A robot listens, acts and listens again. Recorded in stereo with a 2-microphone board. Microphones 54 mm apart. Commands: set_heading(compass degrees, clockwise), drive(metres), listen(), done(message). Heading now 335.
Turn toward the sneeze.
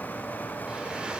listen()
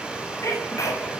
set_heading(260)
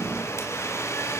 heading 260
listen()
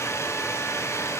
done("I heard a sneeze, but can't make it out now. It was about straight ahead or 30° left.")